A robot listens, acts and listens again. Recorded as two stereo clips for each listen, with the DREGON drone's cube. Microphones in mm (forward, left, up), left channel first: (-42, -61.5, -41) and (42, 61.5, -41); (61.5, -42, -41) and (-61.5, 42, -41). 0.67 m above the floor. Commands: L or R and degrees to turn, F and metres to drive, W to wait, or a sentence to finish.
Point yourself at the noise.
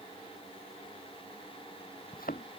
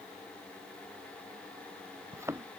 R140
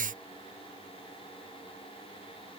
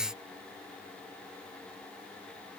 I heard a thud from this way, but can't make it out now.